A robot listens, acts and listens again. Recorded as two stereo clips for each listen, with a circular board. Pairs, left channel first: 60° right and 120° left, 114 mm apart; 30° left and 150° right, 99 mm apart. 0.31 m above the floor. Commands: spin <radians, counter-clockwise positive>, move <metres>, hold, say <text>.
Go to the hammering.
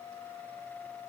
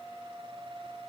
hold
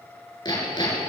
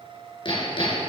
move 1.0
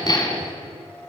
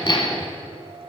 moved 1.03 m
spin -0.17
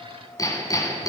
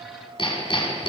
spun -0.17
move 1.0
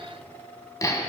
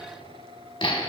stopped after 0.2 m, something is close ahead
say I am next to the hammering.